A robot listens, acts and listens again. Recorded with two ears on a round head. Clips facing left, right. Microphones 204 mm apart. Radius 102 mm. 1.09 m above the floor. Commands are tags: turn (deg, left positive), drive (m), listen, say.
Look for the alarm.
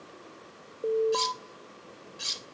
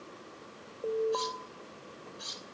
<turn deg="35"/>
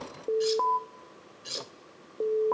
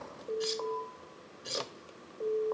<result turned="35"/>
<turn deg="110"/>
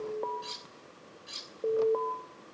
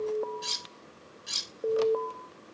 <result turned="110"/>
<say>Facing the alarm, 1 to 2 m away.</say>